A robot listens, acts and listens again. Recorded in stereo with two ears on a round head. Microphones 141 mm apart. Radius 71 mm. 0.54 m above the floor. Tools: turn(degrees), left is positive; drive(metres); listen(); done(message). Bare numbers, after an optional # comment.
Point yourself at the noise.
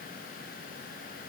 listen()
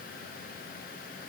listen()
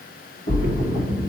# The splash: about 70° left or 110° left.
turn(70)
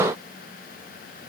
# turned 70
listen()
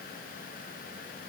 done("I heard a splash, but can't make it out now. It was about straight ahead or 40° left.")